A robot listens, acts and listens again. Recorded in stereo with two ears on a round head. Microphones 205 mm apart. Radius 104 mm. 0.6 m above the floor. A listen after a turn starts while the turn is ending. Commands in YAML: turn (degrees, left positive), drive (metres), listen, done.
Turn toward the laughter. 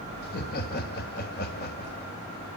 turn: 40
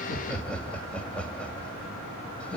done: "Found it: laughter, straight ahead."